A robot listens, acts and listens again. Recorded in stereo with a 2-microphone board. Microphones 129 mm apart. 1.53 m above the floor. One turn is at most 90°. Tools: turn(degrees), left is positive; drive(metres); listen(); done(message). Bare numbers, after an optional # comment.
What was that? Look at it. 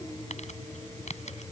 # The crumpling: about 65° left or 115° left.
turn(65)
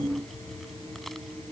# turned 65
listen()
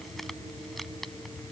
listen()
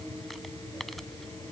done("I heard crumpling, but can't make it out now. It was about straight ahead or 50° left.")